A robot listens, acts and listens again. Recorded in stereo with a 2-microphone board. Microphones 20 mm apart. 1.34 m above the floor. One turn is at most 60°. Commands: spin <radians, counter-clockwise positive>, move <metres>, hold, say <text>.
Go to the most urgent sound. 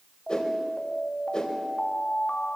spin 1.05
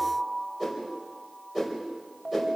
spin 0.35
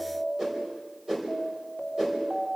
move 1.0
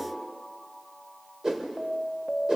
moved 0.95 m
move 1.0
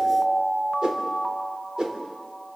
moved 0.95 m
move 1.0
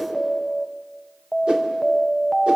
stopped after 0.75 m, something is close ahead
spin 0.17
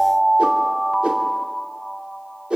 say I am next to the alarm.